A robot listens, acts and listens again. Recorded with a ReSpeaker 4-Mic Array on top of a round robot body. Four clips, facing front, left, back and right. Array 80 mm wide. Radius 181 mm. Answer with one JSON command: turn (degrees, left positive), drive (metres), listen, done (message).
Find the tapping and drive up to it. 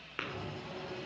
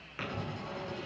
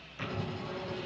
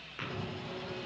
{"drive": 1.0}
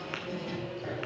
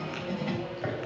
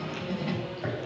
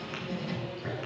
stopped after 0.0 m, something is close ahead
{"listen": true}
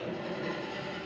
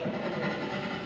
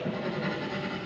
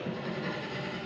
{"listen": true}
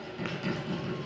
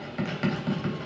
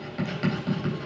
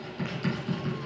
{"done": "I heard tapping from this way, but can't make it out now. I did not reach it."}